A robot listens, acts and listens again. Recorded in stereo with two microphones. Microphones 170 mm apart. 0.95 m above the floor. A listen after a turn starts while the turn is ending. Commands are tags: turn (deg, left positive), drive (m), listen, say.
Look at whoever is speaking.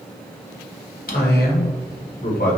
<turn deg="65"/>
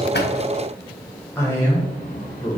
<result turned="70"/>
<turn deg="15"/>
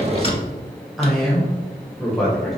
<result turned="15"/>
<say>Facing the man speaking.</say>